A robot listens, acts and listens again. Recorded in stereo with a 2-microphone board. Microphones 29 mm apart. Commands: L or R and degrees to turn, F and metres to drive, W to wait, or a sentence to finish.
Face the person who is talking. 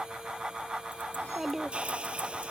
R30
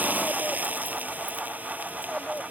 W
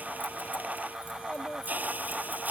L50
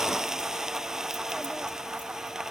W
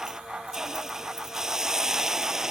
W
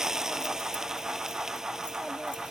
Facing where the child speaking came from. I can't hear it now.